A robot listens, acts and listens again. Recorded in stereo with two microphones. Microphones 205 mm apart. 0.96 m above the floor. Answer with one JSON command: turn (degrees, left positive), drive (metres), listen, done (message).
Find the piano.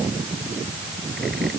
{"listen": true}
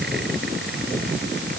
{"listen": true}
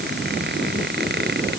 {"done": "I can't make out a piano to turn to."}